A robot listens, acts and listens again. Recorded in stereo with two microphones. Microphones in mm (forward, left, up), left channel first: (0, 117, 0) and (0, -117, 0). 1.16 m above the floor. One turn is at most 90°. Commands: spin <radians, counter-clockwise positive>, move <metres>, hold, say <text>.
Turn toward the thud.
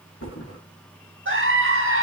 spin 1.57
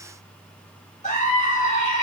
say Facing where the thud came from. I can't hear it now.